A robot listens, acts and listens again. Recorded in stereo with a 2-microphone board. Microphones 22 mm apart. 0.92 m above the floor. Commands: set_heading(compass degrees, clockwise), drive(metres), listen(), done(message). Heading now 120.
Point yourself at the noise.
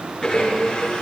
set_heading(85)
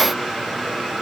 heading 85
done("Found it: a blender, straight ahead, over 4 m away.")